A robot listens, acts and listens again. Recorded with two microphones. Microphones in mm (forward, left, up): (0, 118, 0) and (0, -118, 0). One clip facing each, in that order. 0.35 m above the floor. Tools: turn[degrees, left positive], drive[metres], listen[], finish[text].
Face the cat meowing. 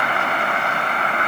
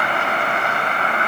Action: listen[]
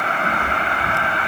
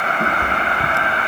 Thought: The cat meowing: about 65° right or 115° right.
Action: turn[-65]
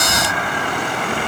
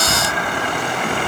Thought: So it is at 40° right.
Action: turn[-40]
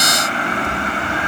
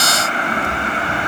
Thought: The cat meowing is now 10° left.
Action: turn[10]
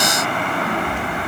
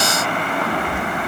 Action: finish[Found it: a cat meowing, straight ahead, over 4 m away.]